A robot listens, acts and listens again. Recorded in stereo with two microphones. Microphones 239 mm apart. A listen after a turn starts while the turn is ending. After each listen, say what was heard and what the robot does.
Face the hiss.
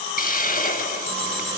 The hiss: about 35° left or 145° left. Turn 35° left.
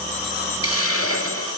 So it is at 110° left. Turn 110° left.
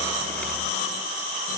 Keep listening.
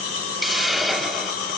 Facing the hiss.